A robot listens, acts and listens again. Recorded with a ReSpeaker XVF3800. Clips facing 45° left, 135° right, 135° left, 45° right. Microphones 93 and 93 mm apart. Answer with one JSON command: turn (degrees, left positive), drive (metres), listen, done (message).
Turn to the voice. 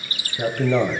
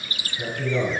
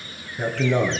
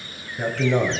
{"turn": 40}
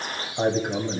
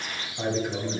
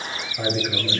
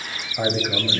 {"turn": 10}
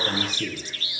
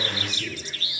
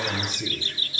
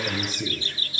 {"done": "Facing the man speaking, 1 to 2 m away."}